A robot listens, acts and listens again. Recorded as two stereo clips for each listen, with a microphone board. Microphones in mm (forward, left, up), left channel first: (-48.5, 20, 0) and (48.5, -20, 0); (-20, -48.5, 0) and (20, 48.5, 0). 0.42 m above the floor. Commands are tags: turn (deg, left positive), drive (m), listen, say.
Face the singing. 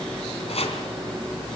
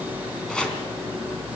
<listen/>
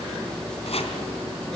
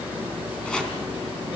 <listen/>
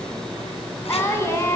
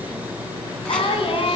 <turn deg="-140"/>
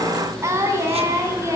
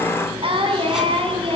<turn deg="40"/>
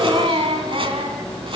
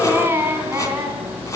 <say>Facing the singing.</say>